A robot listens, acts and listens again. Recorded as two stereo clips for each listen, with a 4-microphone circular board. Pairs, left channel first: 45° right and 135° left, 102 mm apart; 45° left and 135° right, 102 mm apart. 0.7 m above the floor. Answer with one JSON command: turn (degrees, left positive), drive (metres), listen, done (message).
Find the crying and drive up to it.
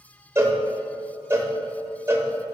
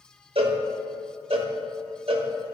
{"listen": true}
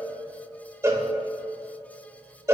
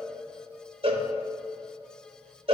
{"listen": true}
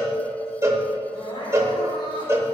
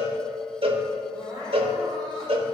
{"turn": -85}
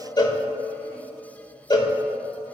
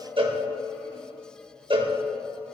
{"listen": true}
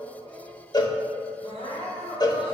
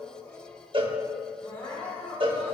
{"turn": -20}
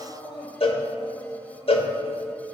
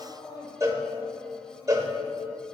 {"drive": 1.0}
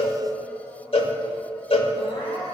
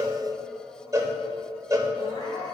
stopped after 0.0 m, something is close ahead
{"done": "Something is in my way. I am facing the crying but have not reached it."}